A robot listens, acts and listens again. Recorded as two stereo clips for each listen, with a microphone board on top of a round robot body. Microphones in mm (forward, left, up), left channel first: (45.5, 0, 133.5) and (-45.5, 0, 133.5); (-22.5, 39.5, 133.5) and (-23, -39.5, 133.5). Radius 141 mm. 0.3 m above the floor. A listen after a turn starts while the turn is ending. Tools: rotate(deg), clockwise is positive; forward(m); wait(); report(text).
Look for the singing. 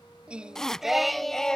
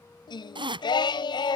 rotate(-80)
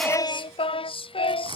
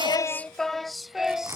rotate(10)
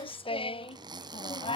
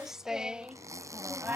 rotate(20)
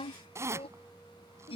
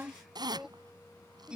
rotate(10)
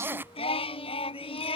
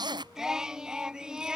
rotate(10)
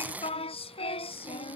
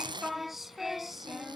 report("Found it: singing, straight ahead.")